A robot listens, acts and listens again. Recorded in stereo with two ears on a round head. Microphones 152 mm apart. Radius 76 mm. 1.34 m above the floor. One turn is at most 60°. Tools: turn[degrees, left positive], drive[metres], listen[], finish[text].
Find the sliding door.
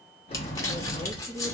Thought: The sliding door: about 40° left or 140° left.
Action: turn[40]
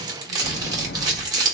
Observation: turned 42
Thought: So it is at 100° left.
Action: turn[60]
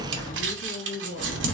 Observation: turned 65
Thought: The sliding door is now 35° left.
Action: turn[35]
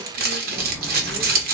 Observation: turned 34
Action: finish[Facing the sliding door.]